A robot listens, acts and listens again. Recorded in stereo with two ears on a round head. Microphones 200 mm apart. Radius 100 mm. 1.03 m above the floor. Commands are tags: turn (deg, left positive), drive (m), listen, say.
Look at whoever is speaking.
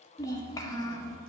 <turn deg="15"/>
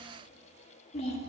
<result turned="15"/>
<turn deg="150"/>
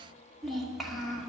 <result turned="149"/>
<say>Facing the child speaking, 1 to 2 m away.</say>